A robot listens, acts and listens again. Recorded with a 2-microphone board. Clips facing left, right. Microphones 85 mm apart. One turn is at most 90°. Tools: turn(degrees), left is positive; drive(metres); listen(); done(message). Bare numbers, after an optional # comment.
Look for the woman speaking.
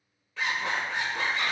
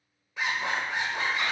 listen()
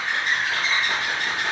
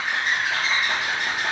listen()
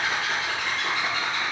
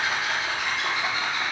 done("I can't make out a woman speaking, only a zipper.")